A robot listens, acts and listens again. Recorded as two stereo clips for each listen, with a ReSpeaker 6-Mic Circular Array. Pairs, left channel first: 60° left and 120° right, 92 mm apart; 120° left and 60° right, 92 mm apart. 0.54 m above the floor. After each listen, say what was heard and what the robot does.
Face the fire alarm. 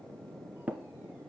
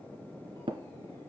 Keep listening.
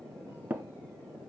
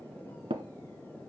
Keep listening.
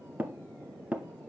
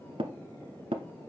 I can't make out a fire alarm, only tapping.